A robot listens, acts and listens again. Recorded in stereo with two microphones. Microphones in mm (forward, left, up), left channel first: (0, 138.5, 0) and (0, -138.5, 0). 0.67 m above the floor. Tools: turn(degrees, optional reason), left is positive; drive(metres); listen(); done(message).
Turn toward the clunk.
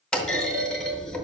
turn(degrees=30)
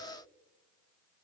listen()
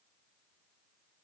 done("I heard a clunk, but can't make it out now. It was about 25° right or 145° left.")